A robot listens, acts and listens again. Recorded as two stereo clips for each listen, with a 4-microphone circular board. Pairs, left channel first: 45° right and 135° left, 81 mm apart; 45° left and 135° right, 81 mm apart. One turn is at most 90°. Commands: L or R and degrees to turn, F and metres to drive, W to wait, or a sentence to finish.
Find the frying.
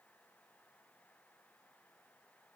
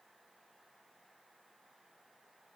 W
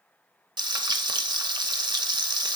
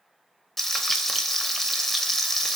L90
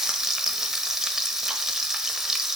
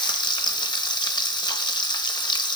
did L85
L50
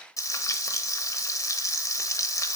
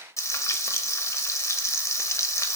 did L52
Facing the frying, under 1 m away.